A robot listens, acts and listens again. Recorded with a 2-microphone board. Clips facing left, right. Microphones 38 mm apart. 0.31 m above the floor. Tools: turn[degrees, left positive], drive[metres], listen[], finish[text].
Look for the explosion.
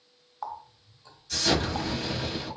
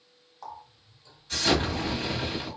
Thought: The explosion: about 30° right or 150° right.
Action: turn[-30]
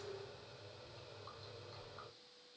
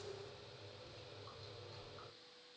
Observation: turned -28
Action: listen[]
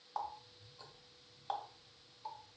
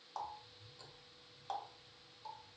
Action: finish[I heard an explosion, but can't make it out now. It was about 5° right or 120° right.]